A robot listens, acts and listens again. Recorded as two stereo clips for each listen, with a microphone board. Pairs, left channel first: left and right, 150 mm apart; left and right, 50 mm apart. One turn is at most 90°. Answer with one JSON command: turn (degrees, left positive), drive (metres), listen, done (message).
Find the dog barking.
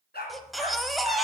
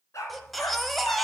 {"turn": 90}
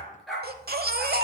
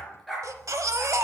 {"done": "Facing the dog barking."}